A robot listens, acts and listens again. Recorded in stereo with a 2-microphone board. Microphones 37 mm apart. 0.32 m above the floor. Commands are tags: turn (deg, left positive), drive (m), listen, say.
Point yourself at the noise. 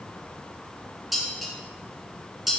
<turn deg="30"/>
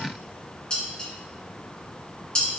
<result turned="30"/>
<turn deg="155"/>
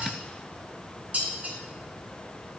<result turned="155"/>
<turn deg="-50"/>
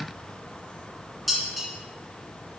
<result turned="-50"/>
<say>Facing the dishes clattering, 2 to 4 m away.</say>